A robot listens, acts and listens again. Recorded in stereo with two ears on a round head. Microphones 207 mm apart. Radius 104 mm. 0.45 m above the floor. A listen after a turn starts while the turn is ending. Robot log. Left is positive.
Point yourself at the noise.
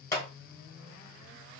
note: The clap: about 15° left or 165° left.
cmd yaw +15
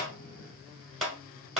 end: Found it: a clap, straight ahead, 1 to 2 m away.